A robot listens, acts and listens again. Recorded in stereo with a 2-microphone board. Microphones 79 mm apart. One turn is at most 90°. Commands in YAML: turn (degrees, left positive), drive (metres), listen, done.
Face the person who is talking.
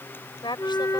turn: 90
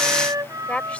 turn: 15
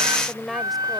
done: "Facing the woman speaking."